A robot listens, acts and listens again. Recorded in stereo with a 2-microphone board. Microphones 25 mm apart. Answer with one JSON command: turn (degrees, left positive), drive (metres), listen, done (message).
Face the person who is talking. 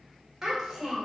{"turn": -20}
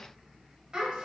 {"turn": -140}
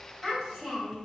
{"done": "Found it: a child speaking, straight ahead, 2 to 4 m away."}